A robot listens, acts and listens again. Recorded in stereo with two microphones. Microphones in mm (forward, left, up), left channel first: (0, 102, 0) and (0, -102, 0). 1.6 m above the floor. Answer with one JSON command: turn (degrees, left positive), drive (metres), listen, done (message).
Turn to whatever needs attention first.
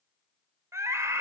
{"turn": -30}
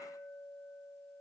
{"listen": true}
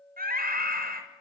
{"turn": -135}
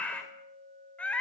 {"done": "Found it: a scream, straight ahead."}